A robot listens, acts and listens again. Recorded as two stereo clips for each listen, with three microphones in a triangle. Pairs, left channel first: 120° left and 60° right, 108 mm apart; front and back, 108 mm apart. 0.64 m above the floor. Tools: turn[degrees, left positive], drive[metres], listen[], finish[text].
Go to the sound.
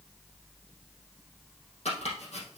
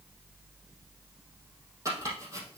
Thought: The chopping: 120° left.
Action: turn[120]
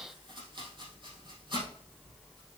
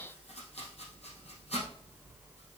Thought: The chopping is now 15° right.
Action: turn[-15]
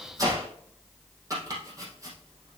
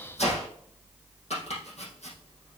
Action: drive[1.0]
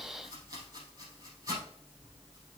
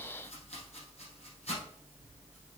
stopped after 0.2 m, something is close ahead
Action: finish[Blocked. The chopping is further on, straight ahead.]